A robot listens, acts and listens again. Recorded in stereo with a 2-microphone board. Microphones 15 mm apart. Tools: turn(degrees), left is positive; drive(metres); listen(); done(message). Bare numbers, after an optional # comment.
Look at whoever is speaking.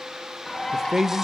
# The man speaking: about 30° right or 150° right.
turn(-30)
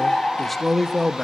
done("Facing the man speaking, 1 to 2 m away.")